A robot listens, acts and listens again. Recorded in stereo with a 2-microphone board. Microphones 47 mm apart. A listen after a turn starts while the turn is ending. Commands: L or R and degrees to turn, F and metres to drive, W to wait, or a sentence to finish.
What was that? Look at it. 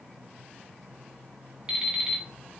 R30
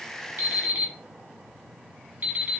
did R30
R135
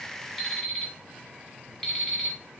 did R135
L10
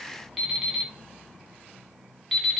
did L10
Facing the alarm clock, 1 to 2 m away.